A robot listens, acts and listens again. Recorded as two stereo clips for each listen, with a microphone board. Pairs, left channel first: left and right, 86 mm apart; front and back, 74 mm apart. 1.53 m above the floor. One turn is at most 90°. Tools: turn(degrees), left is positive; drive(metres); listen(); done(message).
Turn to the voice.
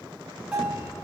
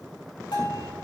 listen()
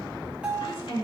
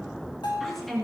turn(degrees=85)
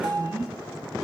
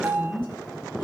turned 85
done("Found it: a woman speaking, straight ahead, 2 to 4 m away.")